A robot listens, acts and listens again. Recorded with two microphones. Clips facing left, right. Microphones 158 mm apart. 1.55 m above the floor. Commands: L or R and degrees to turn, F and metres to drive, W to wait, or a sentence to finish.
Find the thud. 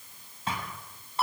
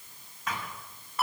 L30
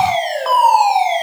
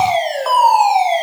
W
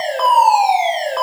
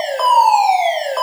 I heard a thud, but can't make it out now. It was about straight ahead or 120° left.